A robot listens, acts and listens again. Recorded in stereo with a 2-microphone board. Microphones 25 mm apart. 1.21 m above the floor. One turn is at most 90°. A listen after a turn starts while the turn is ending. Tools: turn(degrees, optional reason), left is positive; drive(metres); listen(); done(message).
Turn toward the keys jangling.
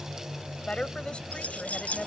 turn(degrees=70, reason="The keys jangling: about 70° left or 110° left.")
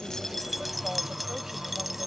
done("Found it: keys jangling, straight ahead.")